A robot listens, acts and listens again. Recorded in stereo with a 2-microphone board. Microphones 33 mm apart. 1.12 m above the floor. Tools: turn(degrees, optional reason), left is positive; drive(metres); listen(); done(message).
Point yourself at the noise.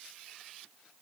listen()
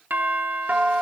turn(degrees=-55, reason="The doorbell: about 55° right or 125° right.")
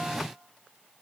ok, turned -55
listen()
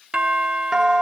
turn(degrees=-25, reason="So it is at 25° right.")
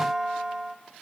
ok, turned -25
turn(degrees=-10, reason="The doorbell is now 10° right.")
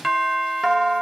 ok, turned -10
done("Facing the doorbell.")